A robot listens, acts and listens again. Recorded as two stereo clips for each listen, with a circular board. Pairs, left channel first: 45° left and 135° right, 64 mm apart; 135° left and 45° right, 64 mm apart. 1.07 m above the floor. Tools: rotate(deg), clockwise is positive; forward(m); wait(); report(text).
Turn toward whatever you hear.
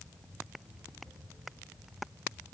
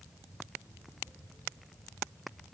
wait()
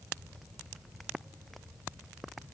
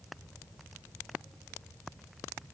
wait()
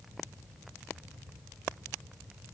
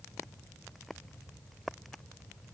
report("I can't make out anything to turn to.")